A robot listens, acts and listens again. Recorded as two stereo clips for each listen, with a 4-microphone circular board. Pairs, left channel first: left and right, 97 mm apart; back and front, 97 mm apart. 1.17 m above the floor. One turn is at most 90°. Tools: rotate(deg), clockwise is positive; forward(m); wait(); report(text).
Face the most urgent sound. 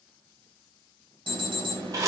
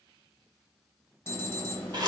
rotate(90)
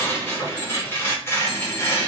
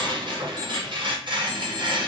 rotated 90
rotate(25)
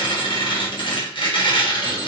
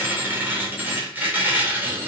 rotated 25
wait()
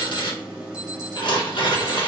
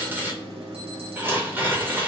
rotate(10)
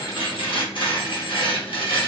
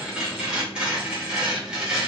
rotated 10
wait()
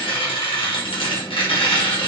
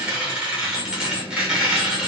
report("Facing the alarm, 1 to 2 m away.")